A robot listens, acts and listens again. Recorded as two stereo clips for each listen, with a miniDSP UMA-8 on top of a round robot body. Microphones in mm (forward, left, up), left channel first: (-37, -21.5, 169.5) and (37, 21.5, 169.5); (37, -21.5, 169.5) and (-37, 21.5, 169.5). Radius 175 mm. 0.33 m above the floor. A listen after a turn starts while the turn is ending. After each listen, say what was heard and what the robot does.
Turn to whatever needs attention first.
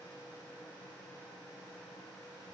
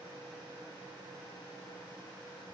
Keep listening.
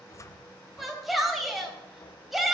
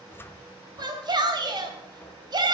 The shout: 120° left. Turn 120° left.
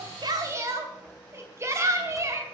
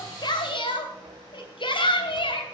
The shout is now 25° right. Turn 25° right.
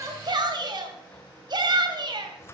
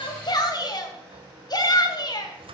Found it: a shout, straight ahead.